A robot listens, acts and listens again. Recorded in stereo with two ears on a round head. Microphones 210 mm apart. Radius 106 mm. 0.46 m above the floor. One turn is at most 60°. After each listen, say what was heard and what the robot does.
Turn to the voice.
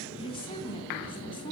The woman speaking: about 20° left or 160° left. Turn 20° left.
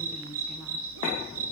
Keep listening.
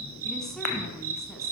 Keep listening.
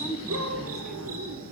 Found it: a woman speaking, straight ahead.